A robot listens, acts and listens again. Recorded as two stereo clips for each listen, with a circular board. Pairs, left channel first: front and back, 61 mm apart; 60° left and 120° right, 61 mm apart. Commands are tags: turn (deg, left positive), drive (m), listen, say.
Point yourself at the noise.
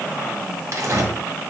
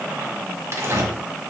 <turn deg="-155"/>
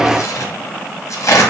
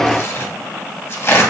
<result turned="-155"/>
<turn deg="20"/>
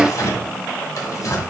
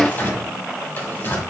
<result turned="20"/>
<turn deg="10"/>
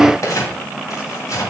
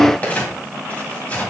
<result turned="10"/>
<say>Facing the tearing paper, 1 to 2 m away.</say>